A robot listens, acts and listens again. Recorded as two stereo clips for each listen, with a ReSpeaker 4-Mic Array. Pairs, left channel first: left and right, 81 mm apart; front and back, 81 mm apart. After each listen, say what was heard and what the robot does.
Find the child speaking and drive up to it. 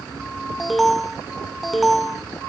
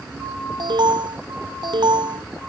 Keep listening.
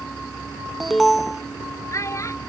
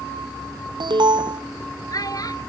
The child speaking: 40° left. Turn 40° left.
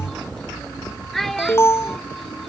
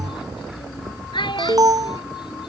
Drive 1.0 m forward.
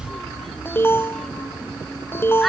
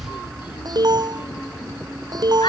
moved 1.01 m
Keep listening.
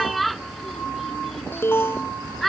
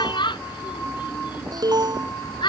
Drive 1.0 m forward.
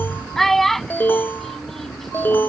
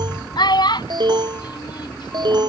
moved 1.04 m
Drive 1.0 m forward.
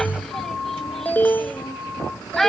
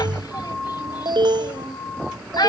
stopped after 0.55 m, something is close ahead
I am next to the child speaking.